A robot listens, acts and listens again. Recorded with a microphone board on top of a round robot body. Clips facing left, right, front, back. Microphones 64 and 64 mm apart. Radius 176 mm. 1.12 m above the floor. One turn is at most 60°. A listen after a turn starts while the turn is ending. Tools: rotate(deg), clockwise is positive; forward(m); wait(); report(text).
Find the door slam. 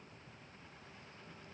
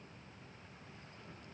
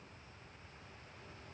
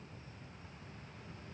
wait()
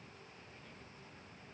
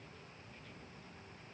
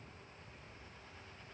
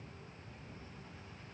wait()
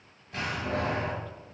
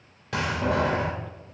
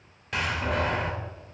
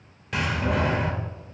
rotate(60)
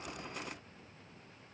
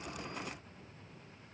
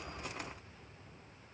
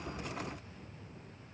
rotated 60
rotate(25)
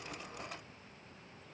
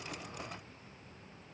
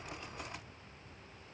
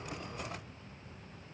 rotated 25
report("Facing where the door slam came from. I can't hear it now.")